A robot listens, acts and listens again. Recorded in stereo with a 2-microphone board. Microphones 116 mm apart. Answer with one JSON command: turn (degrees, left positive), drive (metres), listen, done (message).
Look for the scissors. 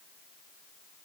{"listen": true}
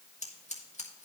{"turn": 90}
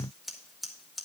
{"done": "Facing the scissors."}